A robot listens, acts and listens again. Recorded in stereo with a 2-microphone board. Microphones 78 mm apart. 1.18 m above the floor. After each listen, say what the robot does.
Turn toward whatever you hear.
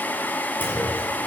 Turn 20° left.
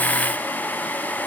Keep listening.
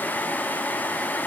I heard a clunk, but can't make it out now. It was about straight ahead or 140° left.